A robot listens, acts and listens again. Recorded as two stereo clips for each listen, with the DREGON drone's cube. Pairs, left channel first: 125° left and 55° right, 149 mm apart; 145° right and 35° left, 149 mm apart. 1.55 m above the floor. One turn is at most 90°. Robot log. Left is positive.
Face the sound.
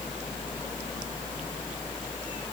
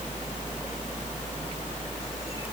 cmd idle
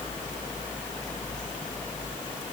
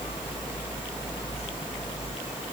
cmd idle
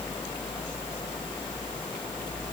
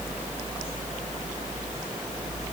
end: I can't make out anything to turn to.